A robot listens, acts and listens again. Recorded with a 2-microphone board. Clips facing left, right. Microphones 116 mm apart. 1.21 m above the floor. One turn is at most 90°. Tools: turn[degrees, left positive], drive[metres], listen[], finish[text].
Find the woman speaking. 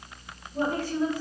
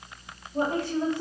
Thought: The woman speaking: about 25° right or 155° right.
Action: turn[-25]
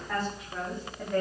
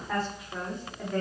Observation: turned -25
Action: finish[Facing the woman speaking, 2 to 4 m away.]